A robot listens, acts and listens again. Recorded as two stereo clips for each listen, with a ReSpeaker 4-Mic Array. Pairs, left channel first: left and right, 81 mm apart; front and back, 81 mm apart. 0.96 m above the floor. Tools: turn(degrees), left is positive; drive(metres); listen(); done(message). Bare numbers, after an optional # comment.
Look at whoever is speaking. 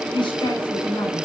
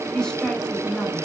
# The woman speaking: 85° left.
turn(85)
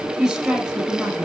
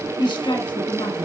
done("Found it: a woman speaking, straight ahead.")